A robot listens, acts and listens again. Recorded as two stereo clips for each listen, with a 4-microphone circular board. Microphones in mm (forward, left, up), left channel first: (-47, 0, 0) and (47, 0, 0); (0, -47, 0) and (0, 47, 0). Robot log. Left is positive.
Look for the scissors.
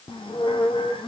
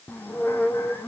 cmd idle
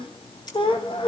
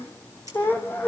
note: The scissors: 140° left.
cmd yaw +140
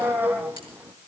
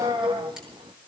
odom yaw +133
cmd idle
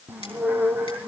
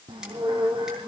cmd idle
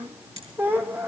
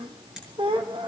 end: Facing the scissors.